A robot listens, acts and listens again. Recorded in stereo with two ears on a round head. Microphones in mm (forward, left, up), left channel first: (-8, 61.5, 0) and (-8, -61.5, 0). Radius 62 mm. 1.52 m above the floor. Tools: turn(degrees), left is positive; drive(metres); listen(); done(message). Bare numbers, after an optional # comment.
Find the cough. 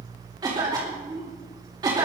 # The cough: about 30° right or 150° right.
turn(-30)
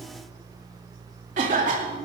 # So it is at 115° right.
turn(-115)
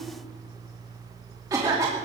# The cough is now 25° right.
turn(-25)
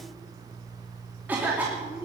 # The cough is now 15° right.
turn(-15)
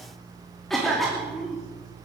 done("Found it: a cough, straight ahead.")